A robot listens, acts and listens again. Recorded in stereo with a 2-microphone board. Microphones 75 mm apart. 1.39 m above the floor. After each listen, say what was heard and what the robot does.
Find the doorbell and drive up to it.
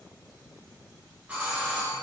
The doorbell: about 15° right or 165° right. Turn 15° right.
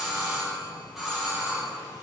Drive 1.0 m forward.
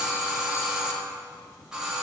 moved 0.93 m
The doorbell is now 10° right. Turn 10° right.
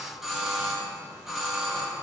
Drive 1.0 m forward.
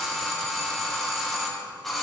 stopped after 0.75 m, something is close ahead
Arrived at the doorbell, straight ahead.